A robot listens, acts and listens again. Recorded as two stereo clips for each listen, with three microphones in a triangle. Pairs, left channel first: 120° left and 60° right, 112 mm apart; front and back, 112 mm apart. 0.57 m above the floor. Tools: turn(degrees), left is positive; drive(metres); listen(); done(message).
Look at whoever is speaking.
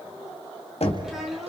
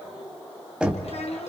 turn(degrees=25)
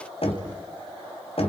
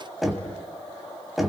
listen()
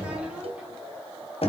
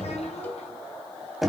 listen()
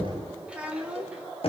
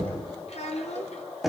turn(degrees=20)
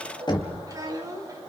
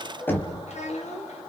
done("Facing the child speaking.")